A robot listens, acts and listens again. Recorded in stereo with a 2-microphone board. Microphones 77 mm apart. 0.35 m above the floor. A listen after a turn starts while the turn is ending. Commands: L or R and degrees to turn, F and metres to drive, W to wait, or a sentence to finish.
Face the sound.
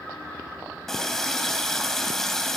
L30
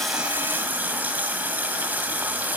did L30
R25
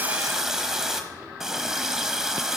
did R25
Found it: a running tap, straight ahead, 1 to 2 m away.